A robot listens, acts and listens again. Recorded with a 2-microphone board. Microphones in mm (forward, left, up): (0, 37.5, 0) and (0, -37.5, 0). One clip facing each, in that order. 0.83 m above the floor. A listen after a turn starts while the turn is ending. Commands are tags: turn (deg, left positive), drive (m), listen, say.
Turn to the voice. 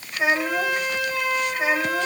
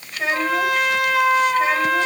<turn deg="30"/>
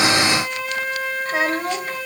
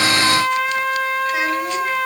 <listen/>
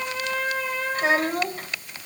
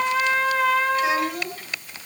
<turn deg="140"/>
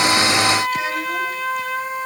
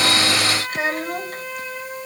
<listen/>
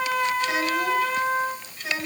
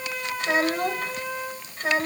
<turn deg="-40"/>
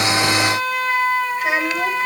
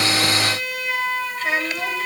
<turn deg="15"/>
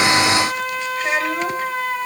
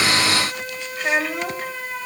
<say>Facing the child speaking.</say>